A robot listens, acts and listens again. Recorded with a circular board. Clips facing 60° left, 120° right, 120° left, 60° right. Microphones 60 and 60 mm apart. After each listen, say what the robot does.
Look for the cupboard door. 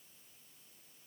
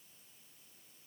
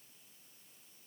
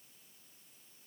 Keep listening.
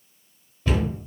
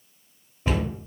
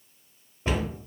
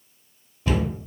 Turn 175° left.
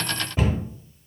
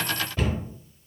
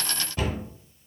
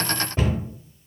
Turn 10° right.
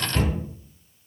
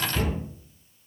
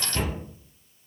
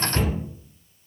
Facing the cupboard door.